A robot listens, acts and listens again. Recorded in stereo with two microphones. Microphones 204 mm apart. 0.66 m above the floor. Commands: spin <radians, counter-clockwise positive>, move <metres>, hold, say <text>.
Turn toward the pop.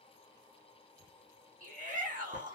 hold
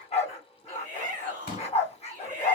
spin 0.87
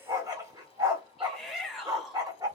hold
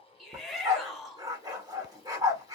say I heard a pop, but can't make it out now. It was about straight ahead or 80° left.